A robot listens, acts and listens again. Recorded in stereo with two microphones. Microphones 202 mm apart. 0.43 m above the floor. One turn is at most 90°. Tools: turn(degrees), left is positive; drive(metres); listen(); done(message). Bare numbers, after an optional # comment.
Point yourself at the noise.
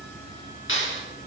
turn(90)
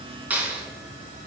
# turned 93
# So it is at 10° right.
turn(-10)
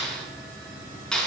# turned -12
done("Found it: a clap, straight ahead.")